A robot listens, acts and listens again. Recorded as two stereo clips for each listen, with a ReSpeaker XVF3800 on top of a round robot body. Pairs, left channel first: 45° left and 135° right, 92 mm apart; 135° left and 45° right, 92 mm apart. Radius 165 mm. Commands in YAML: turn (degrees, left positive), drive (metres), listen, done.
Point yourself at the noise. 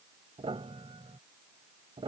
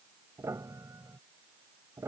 turn: -105
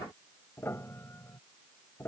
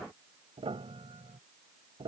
turn: -20
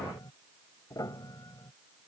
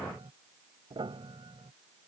turn: -10
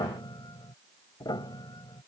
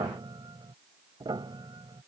done: "Found it: a piano, straight ahead."